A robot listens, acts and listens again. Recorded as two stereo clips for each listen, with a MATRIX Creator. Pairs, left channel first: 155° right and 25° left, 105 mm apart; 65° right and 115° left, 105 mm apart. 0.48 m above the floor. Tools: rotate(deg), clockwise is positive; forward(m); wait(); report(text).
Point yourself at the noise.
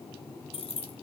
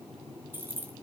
rotate(175)
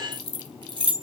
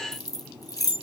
rotate(15)
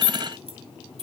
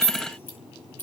report("Facing the keys jangling, 1 to 2 m away.")